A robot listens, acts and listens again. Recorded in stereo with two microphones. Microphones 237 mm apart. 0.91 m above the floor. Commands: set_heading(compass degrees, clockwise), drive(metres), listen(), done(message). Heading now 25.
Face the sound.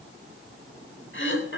set_heading(330)
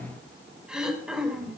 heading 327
done("Facing the throat clearing, 2 to 4 m away.")